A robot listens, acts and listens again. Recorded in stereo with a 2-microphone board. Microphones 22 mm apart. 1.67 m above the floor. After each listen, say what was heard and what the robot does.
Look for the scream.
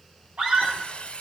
Turn 90° right.
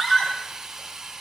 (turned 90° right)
Facing the scream.